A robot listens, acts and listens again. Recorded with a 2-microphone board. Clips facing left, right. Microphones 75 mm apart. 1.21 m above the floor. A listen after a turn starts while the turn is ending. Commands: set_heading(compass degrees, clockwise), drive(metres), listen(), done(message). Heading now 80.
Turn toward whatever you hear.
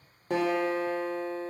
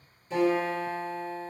set_heading(10)
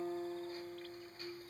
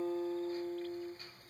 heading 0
set_heading(350)
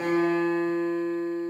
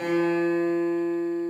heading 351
done("Found it: a guitar, straight ahead, under 1 m away.")